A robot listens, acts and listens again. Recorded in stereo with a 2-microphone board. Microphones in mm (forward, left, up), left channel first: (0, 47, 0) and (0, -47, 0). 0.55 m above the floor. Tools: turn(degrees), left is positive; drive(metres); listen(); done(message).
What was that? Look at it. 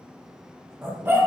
turn(degrees=-25)
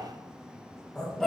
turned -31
done("Facing the dog barking.")